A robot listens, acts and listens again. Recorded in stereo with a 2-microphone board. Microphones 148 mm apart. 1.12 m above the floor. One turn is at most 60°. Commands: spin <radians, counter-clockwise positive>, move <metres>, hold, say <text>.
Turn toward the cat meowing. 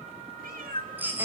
spin -1.05
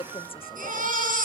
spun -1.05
hold
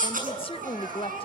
hold
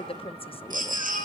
say I heard a cat meowing, but can't make it out now. It was about 15° right or 45° right.